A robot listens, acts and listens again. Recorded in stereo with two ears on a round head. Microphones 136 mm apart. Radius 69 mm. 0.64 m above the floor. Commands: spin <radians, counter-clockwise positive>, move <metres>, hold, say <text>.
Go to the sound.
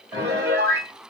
spin -0.35
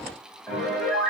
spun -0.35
move 1.0
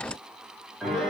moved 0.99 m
move 1.0
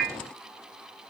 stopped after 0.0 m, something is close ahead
say Arrived at the piano, straight ahead.